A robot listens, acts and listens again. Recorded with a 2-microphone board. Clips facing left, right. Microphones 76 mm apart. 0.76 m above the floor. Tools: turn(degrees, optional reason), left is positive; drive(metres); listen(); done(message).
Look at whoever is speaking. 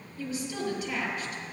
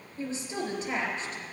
turn(degrees=-35, reason="The woman speaking: about 35° right or 145° right.")
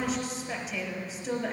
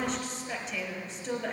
done("Facing the woman speaking.")